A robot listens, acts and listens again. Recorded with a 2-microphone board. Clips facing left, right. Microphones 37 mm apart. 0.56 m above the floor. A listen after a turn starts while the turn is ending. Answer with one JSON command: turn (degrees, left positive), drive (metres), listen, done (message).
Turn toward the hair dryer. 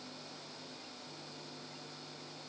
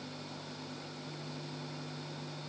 {"listen": true}
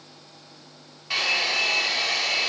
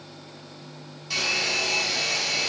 {"turn": 30}
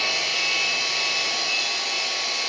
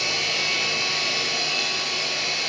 {"done": "Facing the hair dryer, over 4 m away."}